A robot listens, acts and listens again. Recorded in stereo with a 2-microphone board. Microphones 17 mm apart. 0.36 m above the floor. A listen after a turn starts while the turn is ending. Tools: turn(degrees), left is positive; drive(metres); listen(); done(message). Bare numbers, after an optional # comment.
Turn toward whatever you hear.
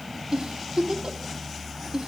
# The giggle: about 65° right or 115° right.
turn(-65)
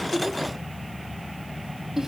listen()
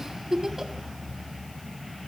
# So it is at 25° right.
turn(-25)
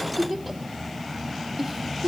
done("Facing the giggle, 1 to 2 m away.")